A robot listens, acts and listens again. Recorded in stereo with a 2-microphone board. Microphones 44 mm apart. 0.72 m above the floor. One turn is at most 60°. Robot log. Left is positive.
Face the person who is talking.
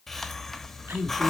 note: The woman speaking: about 65° right or 115° right.
cmd yaw -60
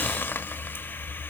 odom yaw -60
cmd idle
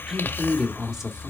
note: So it is at 15° right.
cmd yaw -15
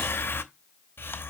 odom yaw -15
cmd idle
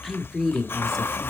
end: Found it: a woman speaking, straight ahead, 1 to 2 m away.